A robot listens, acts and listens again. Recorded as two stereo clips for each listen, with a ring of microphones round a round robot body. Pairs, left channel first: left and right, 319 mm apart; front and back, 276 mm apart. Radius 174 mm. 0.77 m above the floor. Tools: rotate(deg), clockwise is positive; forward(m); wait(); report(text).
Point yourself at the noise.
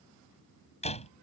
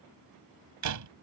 rotate(-160)
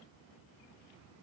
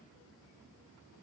report("Facing where the door slam came from. I can't hear it now.")